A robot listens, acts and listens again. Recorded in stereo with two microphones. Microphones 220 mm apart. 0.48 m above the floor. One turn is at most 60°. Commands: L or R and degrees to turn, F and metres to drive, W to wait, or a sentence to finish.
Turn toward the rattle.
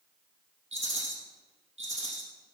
R60
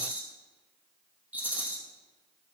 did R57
Facing the rattle.